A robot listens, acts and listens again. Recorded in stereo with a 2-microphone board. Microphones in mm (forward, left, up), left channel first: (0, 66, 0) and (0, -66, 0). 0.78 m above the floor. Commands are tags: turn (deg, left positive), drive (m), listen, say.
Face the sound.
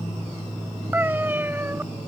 <turn deg="-15"/>
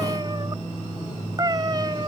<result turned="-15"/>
<turn deg="-150"/>
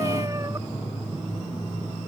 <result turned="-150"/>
<turn deg="-25"/>
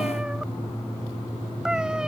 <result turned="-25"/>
<say>Found it: a cat meowing, straight ahead.</say>